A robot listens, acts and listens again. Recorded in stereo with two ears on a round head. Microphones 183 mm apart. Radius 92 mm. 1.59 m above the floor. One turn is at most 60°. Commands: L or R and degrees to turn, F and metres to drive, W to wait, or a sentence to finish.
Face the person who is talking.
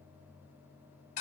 W
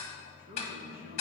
R50
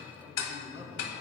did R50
R15
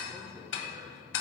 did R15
R15
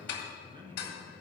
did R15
R25
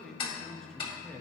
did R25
Found it: a man speaking, straight ahead.